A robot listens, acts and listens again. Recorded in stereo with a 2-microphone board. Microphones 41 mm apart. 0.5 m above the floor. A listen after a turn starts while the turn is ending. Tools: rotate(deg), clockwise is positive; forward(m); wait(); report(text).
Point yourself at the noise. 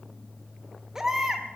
rotate(30)
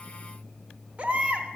rotate(135)
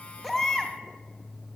rotate(-25)
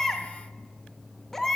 rotate(-10)
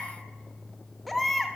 report("Facing the baby crying, under 1 m away.")